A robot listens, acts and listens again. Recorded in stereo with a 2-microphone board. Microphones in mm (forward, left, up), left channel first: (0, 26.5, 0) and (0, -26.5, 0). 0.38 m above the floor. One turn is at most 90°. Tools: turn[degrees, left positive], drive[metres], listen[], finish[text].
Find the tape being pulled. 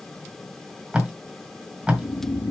Thought: The tape being pulled: about 20° right or 160° right.
Action: turn[-20]
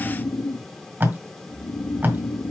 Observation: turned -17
Thought: So it is at 145° right.
Action: turn[-90]
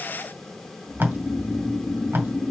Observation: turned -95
Thought: The tape being pulled is now 45° right.
Action: turn[-45]
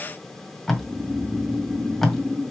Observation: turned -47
Action: finish[Found it: tape being pulled, straight ahead.]